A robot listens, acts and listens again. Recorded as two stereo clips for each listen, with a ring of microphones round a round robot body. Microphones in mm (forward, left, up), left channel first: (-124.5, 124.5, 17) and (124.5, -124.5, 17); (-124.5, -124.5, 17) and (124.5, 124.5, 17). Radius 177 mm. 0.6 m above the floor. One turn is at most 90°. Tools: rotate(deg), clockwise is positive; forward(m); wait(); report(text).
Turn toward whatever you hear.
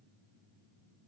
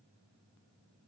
wait()
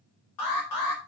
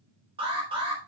rotate(-90)
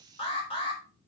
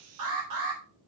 rotate(-60)
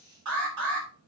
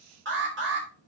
rotate(10)
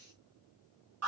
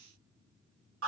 report("Found it: an alarm, straight ahead, over 4 m away.")